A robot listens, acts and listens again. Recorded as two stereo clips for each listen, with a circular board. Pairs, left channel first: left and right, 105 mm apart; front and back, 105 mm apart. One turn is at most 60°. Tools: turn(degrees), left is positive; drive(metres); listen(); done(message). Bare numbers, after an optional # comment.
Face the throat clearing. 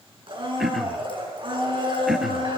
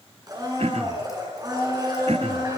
# The throat clearing: straight behind.
turn(60)
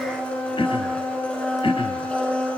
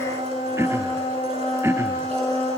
# The throat clearing is now 120° left.
turn(60)
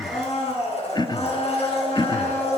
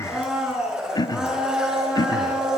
# The throat clearing is now 50° left.
turn(50)
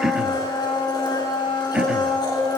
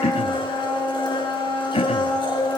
# The throat clearing is now 10° right.
turn(-10)
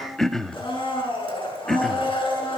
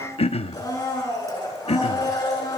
done("Facing the throat clearing.")